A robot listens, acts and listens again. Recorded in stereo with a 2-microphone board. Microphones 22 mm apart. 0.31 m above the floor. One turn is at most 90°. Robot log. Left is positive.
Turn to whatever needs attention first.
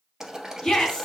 note: The shout: about 50° left or 130° left.
cmd yaw +50
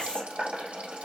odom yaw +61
note: So it is at 60° left.
cmd yaw +60
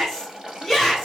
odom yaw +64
end: Facing the shout, 2 to 4 m away.